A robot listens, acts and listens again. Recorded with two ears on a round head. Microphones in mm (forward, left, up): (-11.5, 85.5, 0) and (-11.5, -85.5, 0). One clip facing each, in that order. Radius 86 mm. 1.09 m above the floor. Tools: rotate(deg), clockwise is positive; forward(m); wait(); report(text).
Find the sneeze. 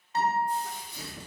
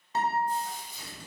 rotate(-55)
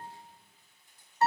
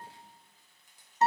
wait()
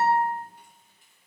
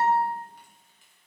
report("I heard a sneeze, but can't make it out now. It was about straight ahead or 70° left.")